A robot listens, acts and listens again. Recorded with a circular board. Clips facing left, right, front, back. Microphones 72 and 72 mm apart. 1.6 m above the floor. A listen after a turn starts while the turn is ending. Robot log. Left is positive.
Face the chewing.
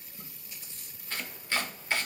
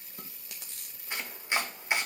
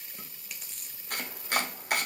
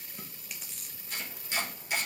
note: The chewing: 90° right.
cmd yaw -90
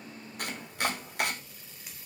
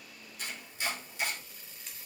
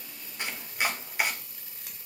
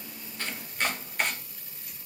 cmd idle
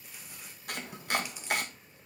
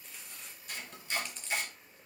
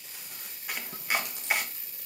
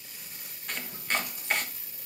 cmd idle
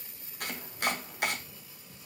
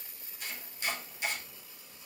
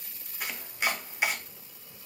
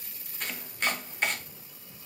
end: I heard chewing from this way, but can't make it out now.